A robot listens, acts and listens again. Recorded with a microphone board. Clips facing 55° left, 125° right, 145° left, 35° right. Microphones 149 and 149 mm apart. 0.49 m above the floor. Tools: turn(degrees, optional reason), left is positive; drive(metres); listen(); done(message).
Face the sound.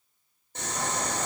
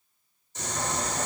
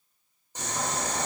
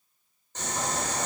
turn(degrees=70, reason="The boiling: 70° left.")
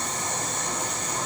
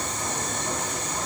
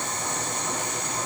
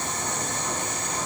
turn(degrees=10, reason="The boiling is now 10° left.")
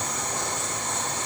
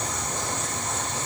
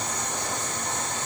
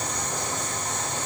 done("Found it: boiling, straight ahead.")